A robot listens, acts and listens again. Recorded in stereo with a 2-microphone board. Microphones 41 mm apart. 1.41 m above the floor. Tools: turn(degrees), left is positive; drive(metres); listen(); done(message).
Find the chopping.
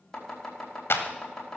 turn(degrees=30)
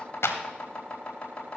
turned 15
turn(degrees=155)
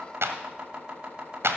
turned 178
turn(degrees=-25)
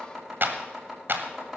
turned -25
done("Found it: chopping, straight ahead, over 4 m away.")